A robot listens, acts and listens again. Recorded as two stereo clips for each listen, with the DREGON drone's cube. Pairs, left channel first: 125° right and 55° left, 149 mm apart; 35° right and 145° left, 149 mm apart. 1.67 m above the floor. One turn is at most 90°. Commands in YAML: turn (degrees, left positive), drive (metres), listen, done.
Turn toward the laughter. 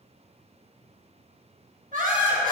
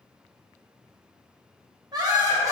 turn: 75
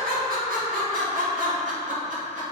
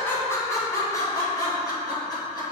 turn: 25
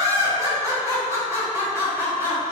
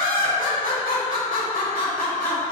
turn: -20
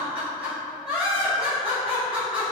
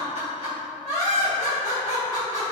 done: "Found it: laughter, straight ahead."